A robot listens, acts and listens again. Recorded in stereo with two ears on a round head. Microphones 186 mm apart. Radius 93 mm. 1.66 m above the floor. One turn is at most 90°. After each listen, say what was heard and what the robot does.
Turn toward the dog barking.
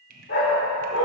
The dog barking: about 60° left or 120° left. Turn 60° left.
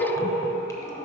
So it is at 40° left. Turn 40° left.
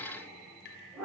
Facing the dog barking.